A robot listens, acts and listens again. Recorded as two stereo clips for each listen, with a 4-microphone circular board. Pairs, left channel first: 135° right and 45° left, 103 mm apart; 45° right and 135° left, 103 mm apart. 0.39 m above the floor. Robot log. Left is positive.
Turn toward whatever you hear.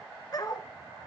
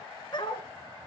note: The dog barking: 85° right.
cmd yaw -85
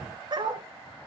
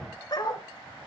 end: Facing the dog barking, 1 to 2 m away.